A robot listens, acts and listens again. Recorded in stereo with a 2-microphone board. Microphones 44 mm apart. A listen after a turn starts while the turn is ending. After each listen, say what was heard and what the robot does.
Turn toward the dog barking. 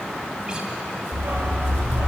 The dog barking: about 60° right or 120° right. Turn 60° right.
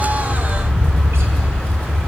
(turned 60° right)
So it is at 55° right. Turn 55° right.
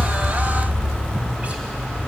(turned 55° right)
The dog barking is now 20° left. Turn 20° left.
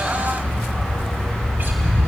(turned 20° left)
Found it: a dog barking, straight ahead, over 4 m away.